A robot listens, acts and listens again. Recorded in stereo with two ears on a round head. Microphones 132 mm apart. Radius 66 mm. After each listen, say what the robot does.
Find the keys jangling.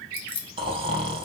Turn 35° left.
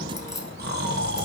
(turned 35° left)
Keep listening.
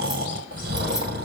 Keep listening.
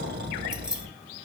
I heard keys jangling, but can't make it out now. It was about straight ahead or 110° left.